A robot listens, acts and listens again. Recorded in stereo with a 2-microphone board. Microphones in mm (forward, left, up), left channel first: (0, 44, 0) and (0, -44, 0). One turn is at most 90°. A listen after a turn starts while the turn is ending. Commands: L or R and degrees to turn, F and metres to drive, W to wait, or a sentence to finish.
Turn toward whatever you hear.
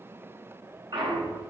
R60
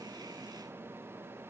W
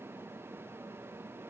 I heard a clunk, but can't make it out now. It was about straight ahead or 60° right.